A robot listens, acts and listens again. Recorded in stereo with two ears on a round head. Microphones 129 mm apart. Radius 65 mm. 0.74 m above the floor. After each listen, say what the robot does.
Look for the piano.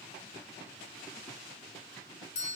Keep listening.
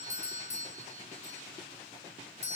Keep listening.
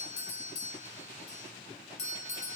I can't make out a piano, only a doorbell.